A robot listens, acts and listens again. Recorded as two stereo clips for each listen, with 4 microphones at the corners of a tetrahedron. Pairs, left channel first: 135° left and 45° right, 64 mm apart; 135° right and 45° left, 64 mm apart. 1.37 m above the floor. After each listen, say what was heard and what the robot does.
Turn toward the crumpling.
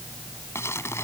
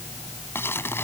The crumpling: 175° left. Turn 175° left.
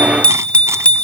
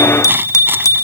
Keep listening.
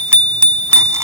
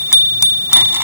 Keep listening.
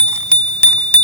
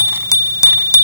I heard crumpling from this way, but can't make it out now.